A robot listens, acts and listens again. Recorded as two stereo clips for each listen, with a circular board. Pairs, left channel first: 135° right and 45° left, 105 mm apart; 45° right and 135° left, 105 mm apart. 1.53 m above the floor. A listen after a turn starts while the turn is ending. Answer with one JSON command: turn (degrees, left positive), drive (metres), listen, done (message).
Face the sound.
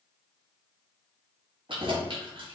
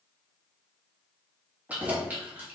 {"turn": 65}
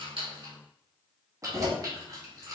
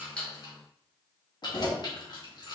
{"done": "Facing the keys jangling."}